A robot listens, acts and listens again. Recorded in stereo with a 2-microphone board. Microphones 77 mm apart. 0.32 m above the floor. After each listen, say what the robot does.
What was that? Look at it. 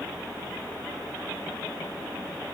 Keep listening.
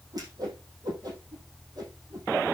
Turn 50° right.
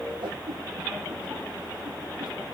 Turn 80° right.
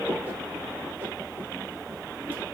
Keep listening.
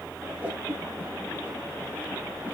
Turn 25° right.
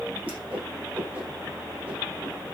Turn 20° right.
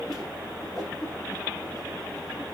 Facing the whoosh, over 4 m away.